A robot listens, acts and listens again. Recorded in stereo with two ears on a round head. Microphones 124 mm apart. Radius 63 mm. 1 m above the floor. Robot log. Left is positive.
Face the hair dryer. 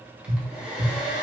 cmd yaw -30
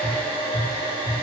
note: So it is at 140° right.
cmd yaw -140
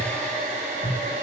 note: The hair dryer is now 50° right.
cmd yaw -50
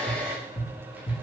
note: The hair dryer is now 10° right.
cmd yaw -10
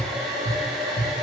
end: Found it: a hair dryer, straight ahead.